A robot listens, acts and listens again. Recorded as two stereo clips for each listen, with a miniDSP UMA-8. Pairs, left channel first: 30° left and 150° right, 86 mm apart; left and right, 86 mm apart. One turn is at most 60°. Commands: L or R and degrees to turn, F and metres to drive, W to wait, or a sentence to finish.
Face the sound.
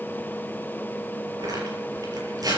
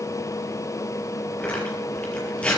L60
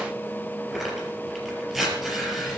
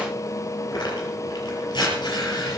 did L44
L60
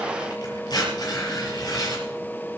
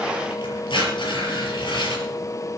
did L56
L60
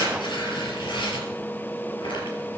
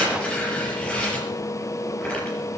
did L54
L15
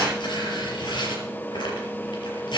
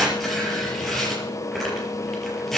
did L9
Facing the tearing paper, over 4 m away.